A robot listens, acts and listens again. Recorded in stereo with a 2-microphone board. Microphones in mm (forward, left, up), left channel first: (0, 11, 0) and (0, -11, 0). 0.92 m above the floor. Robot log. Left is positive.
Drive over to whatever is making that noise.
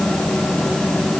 cmd idle
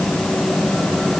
cmd idle
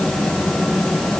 end: I can't make out anything.